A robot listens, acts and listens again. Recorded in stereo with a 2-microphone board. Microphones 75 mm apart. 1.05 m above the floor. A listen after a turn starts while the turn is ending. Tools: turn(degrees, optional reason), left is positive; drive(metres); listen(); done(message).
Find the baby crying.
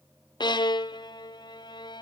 listen()
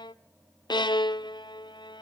listen()
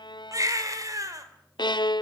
turn(degrees=-45, reason="The baby crying: about 45° right or 135° right.")
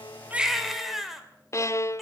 done("Found it: a baby crying, straight ahead.")